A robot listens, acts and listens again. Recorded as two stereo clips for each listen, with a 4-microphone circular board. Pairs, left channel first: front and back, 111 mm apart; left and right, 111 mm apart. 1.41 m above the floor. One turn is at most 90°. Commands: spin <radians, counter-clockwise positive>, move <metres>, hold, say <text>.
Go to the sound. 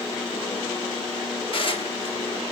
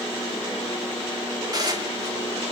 spin -0.61
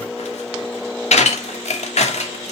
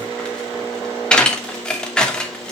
move 1.0
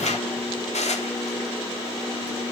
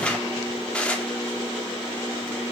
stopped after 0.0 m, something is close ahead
spin 0.17
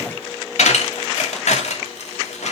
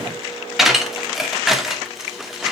say Something is in my way. I am facing the dishes clattering but have not reached it.